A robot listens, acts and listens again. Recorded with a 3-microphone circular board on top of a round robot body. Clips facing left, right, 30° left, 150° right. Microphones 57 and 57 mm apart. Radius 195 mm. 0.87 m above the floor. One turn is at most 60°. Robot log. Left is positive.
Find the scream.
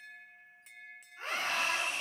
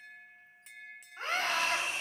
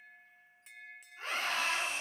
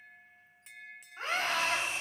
note: The scream: 125° right.
cmd yaw -60
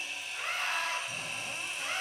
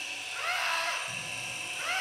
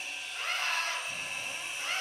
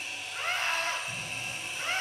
note: The scream is now 90° right.
cmd yaw -60
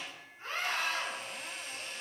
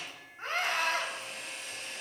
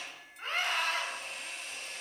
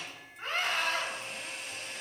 note: The scream is now 60° right.
cmd yaw -60
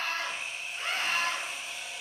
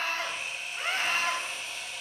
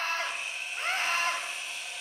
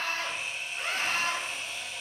note: The scream is now 20° right.
cmd yaw -20
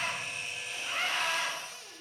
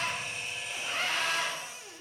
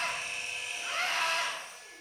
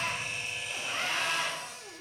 end: Found it: a scream, straight ahead.